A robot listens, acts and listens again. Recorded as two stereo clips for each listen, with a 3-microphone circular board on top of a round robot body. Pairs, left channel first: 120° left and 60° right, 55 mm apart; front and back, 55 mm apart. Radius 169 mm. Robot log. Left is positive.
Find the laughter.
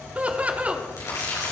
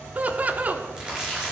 note: The laughter: 125° right.
cmd yaw -125
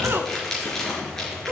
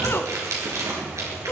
note: The laughter is now 25° right.
cmd yaw -25
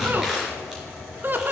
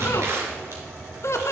note: The laughter is now 15° right.
cmd yaw -15
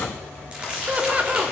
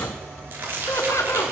end: Found it: laughter, straight ahead, 1 to 2 m away.